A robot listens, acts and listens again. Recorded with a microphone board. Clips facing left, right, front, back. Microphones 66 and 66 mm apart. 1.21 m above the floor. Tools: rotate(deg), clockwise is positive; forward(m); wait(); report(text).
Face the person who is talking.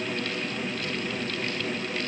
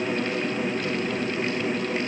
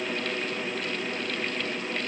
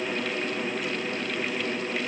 wait()
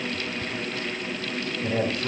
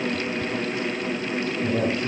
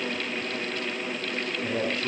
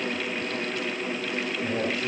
rotate(-95)
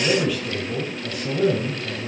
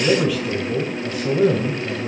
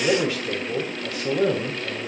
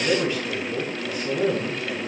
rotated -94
report("Facing the man speaking.")